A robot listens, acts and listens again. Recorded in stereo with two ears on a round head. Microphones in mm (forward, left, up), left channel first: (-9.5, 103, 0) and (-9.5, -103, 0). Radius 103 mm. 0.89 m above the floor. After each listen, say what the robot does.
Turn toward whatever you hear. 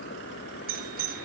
Turn 45° right.
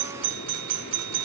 Turn 90° right.
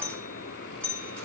Facing the doorbell.